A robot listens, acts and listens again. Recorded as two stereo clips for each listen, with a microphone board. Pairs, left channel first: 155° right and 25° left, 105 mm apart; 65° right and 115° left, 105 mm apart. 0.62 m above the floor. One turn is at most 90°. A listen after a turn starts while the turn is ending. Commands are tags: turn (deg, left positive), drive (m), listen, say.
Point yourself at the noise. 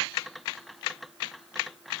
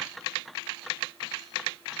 <listen/>
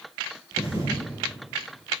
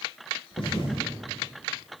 <turn deg="-35"/>
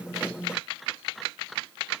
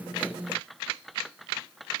<say>Facing where the thud came from. I can't hear it now.</say>